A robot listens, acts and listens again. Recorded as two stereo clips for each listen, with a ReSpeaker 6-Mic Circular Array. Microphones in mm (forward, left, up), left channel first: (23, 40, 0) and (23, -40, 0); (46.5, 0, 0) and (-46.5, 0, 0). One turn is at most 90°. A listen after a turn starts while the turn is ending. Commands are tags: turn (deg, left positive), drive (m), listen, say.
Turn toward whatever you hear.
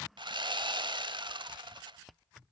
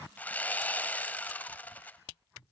<turn deg="-75"/>
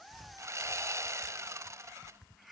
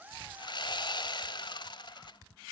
<turn deg="-35"/>
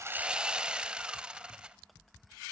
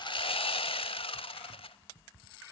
<turn deg="-10"/>
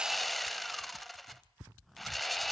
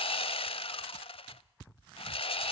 <say>Facing the sawing, under 1 m away.</say>